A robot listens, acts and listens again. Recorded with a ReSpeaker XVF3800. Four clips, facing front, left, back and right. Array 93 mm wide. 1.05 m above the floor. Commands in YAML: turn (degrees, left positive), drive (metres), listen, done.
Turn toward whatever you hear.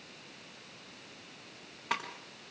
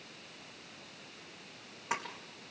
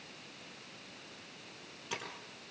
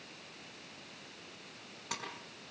turn: 25
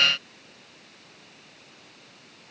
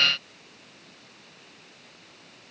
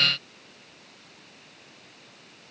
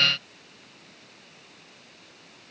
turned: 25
done: "I heard a splash from this way, but can't make it out now."